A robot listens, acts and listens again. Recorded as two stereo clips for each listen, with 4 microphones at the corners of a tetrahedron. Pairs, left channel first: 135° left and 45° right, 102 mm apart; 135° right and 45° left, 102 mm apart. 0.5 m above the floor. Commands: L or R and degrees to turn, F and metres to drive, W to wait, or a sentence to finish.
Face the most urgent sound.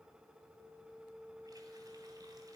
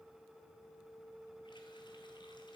W
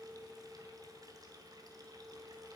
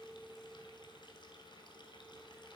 W
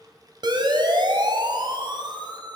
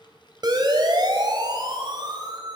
Facing the siren.